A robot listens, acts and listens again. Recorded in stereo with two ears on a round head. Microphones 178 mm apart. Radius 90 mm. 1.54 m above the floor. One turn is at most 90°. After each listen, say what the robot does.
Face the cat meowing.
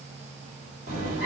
Turn 40° right.
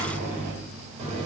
Turn 30° right.
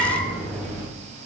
Turn 10° left.
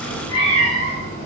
Turn 35° left.
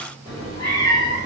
Turn 20° left.
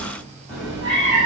Facing the cat meowing, 1 to 2 m away.